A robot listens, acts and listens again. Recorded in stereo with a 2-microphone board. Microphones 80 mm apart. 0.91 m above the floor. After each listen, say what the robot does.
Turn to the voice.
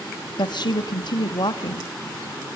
Turn 65° left.
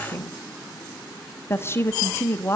Turn 35° left.
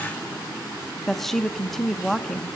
Facing the woman speaking.